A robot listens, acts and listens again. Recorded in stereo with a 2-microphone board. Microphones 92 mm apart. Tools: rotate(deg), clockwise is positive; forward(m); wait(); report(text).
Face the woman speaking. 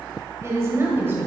rotate(25)
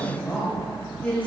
rotate(-15)
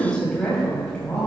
rotate(-15)
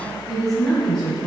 rotate(-10)
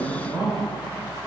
report("Facing the woman speaking, 2 to 4 m away.")